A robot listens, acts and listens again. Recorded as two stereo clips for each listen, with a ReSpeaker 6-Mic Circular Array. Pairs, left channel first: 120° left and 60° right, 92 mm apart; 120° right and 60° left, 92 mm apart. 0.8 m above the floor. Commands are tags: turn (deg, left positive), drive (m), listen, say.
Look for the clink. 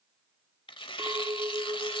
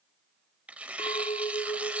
<turn deg="-110"/>
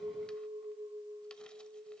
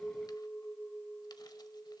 <turn deg="-45"/>
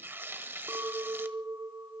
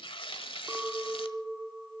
<turn deg="-10"/>
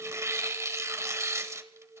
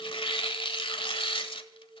<say>Facing the clink.</say>